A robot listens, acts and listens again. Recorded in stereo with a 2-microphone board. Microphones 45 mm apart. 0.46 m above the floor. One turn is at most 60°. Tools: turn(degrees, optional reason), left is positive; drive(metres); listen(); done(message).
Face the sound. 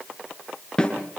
turn(degrees=15, reason="The snare drum: about 15° left or 165° left.")
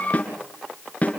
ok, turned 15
turn(degrees=60, reason="So it is at 150° left.")
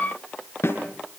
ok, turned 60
turn(degrees=60, reason="The snare drum is now 75° left.")
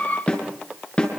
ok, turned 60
turn(degrees=25, reason="The snare drum is now 25° left.")
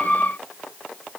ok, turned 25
listen()
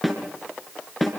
done("Facing the snare drum, over 4 m away.")